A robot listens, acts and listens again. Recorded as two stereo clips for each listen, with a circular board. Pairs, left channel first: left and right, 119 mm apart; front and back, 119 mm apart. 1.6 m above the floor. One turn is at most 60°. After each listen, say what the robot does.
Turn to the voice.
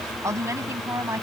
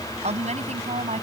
Turn 60° right.
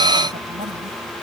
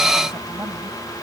Turn 60° right.
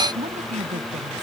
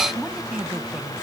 Turn 60° right.
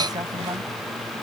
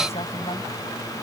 Turn 30° right.
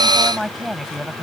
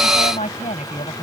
Found it: a woman speaking, straight ahead.